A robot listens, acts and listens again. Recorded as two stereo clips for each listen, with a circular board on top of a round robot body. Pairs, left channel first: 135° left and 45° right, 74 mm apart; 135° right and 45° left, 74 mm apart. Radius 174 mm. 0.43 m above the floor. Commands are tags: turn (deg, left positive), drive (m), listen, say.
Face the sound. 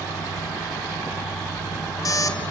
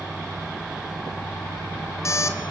<turn deg="175"/>
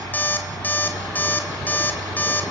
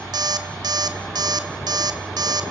<turn deg="70"/>
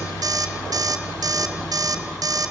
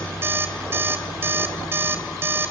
<turn deg="-15"/>
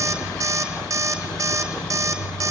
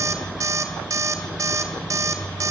<say>Found it: an alarm clock, straight ahead, 1 to 2 m away.</say>